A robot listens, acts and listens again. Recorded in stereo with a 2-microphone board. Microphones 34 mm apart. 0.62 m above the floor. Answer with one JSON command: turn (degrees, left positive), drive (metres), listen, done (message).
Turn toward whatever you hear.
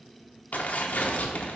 {"turn": 60}
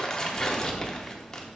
{"turn": 20}
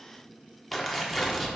{"done": "Found it: tearing paper, straight ahead."}